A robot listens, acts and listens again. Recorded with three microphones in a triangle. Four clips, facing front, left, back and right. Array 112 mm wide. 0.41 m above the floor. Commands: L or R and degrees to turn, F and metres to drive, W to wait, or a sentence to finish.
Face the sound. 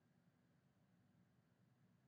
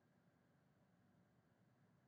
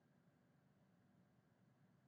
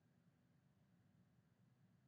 W
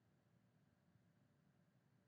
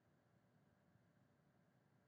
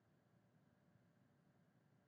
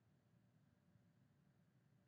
W
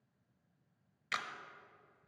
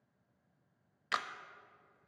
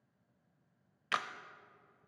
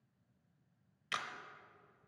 L140
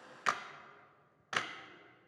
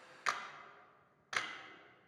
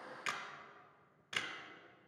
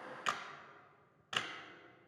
R10
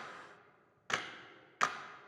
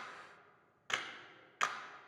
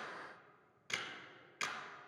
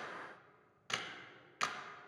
Found it: a camera shutter, straight ahead, under 1 m away.